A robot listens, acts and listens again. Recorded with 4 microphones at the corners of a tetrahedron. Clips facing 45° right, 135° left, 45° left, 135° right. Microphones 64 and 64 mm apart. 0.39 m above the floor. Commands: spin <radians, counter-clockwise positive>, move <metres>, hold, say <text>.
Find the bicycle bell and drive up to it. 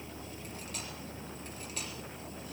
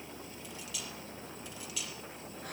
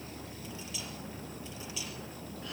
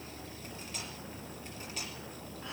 hold
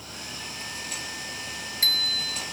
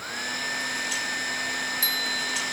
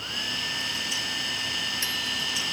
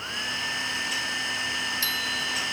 spin -0.44
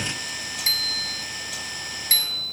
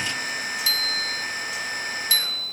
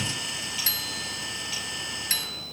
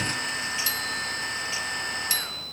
move 1.0
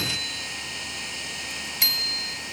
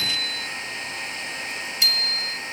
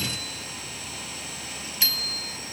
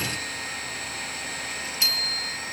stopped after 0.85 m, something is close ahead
say I am next to the bicycle bell.